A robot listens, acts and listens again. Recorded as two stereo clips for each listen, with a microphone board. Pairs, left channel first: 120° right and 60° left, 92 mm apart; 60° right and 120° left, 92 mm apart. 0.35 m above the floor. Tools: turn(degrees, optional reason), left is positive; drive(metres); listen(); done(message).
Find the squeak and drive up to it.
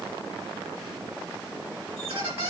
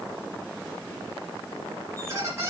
turn(degrees=60, reason="The squeak: 60° left.")
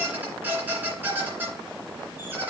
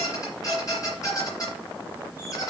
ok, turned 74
turn(degrees=-10, reason="The squeak is now 10° right.")
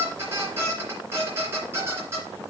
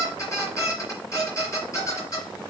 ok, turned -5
drive(metres=1.0)
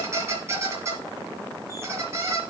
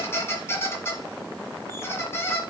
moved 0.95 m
drive(metres=1.0)
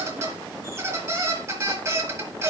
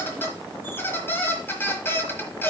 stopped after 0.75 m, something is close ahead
done("I am next to the squeak.")